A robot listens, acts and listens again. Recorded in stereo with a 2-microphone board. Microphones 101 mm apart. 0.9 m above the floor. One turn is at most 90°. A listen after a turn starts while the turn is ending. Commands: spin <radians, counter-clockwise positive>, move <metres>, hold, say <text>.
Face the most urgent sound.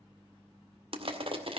hold
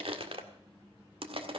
hold
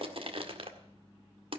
say I can't make out anything urgent to turn to.